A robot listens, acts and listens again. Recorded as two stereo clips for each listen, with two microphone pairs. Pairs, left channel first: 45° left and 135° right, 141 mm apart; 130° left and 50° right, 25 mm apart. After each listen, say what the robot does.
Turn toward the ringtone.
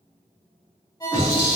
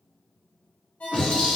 Turn 110° left.
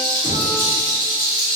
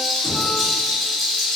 Keep listening.
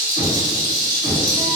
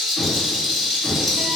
Keep listening.
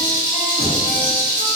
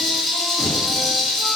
I heard a ringtone from this way, but can't make it out now.